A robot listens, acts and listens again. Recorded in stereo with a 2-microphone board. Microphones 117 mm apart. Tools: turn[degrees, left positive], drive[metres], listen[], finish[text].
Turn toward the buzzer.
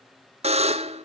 Thought: The buzzer: about 65° right or 115° right.
Action: turn[-65]
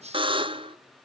Thought: So it is at 50° right.
Action: turn[-50]
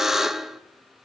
Action: finish[Facing the buzzer, under 1 m away.]